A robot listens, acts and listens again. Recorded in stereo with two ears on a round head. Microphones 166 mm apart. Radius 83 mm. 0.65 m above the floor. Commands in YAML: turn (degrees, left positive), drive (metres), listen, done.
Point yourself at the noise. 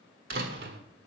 turn: -55
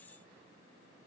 listen: true
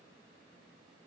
done: "I heard a door slam, but can't make it out now. It was about straight ahead or 70° right."